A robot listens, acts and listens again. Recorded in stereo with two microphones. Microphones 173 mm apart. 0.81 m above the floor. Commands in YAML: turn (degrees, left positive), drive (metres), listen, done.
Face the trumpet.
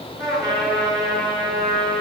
turn: -20
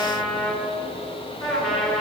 done: "Found it: a trumpet, straight ahead, 2 to 4 m away."